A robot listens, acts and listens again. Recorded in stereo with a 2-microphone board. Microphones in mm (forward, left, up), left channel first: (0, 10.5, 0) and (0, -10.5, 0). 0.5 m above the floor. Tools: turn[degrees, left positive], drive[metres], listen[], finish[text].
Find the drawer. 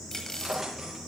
Thought: The drawer: about 15° right or 165° right.
Action: turn[-15]
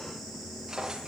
Thought: So it is at 150° right.
Action: turn[-150]
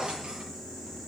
Thought: The drawer is now 40° right.
Action: turn[-40]
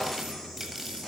Action: finish[Facing the drawer, over 4 m away.]